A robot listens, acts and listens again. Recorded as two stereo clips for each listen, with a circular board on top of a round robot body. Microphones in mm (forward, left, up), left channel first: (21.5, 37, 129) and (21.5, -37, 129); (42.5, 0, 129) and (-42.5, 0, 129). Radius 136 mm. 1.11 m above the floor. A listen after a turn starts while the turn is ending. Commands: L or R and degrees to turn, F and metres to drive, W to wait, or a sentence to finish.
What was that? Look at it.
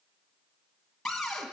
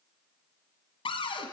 Found it: a cupboard door, straight ahead.